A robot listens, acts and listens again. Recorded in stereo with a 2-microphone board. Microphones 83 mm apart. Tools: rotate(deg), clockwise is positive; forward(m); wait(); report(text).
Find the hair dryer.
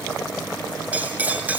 wait()
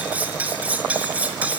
wait()
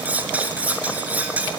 report("I can't make out a hair dryer to turn to.")